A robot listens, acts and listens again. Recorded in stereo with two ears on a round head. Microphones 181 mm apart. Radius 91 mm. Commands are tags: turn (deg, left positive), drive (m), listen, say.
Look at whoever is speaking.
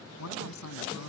<turn deg="90"/>
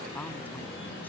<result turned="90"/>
<turn deg="10"/>
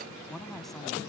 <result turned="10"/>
<say>Found it: a woman speaking, straight ahead.</say>